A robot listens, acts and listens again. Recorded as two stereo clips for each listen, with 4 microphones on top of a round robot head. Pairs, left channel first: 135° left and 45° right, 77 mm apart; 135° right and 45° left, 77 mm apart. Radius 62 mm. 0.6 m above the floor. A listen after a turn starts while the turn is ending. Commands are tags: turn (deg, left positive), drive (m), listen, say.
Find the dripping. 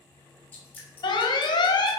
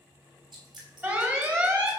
<turn deg="70"/>
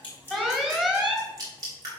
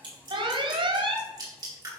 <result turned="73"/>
<say>Facing the dripping.</say>